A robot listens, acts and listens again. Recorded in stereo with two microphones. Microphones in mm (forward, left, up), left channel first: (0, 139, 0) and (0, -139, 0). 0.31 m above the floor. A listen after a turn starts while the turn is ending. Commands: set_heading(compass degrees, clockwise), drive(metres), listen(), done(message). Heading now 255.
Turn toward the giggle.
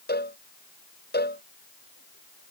listen()
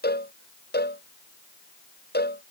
listen()
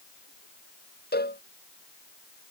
done("I can't make out a giggle to turn to.")